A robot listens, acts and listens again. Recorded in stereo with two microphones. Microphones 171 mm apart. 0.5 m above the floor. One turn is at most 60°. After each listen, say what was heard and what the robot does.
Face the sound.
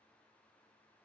Keep listening.
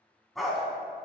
Turn 30° left.
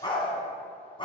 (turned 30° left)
So it is at 150° left. Turn 60° left.
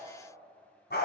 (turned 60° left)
The dog barking is now 100° left. Turn 60° left.
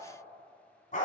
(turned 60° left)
The dog barking is now 50° left. Turn 50° left.
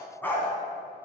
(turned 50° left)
The dog barking is now 10° left. Turn 10° left.
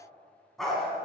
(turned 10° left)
Facing the dog barking, 1 to 2 m away.